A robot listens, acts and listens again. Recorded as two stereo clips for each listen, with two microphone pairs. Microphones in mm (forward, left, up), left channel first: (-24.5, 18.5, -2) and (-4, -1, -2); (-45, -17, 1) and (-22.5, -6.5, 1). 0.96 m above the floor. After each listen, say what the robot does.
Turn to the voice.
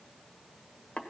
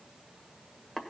Keep listening.
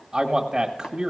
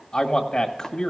Turn 110° right.
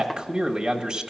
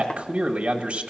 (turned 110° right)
Found it: a man speaking, straight ahead.